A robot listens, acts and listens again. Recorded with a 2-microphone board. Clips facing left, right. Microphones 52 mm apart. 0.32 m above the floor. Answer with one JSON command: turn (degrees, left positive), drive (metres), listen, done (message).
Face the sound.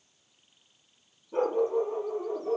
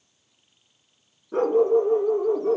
{"turn": -70}
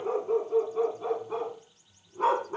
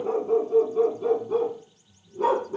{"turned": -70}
{"turn": 45}
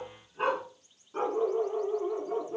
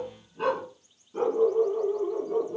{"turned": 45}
{"turn": 45}
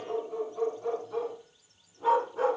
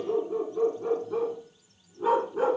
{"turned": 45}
{"turn": -10}
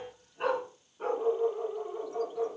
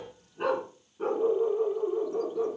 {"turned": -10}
{"done": "Found it: a dog barking, straight ahead."}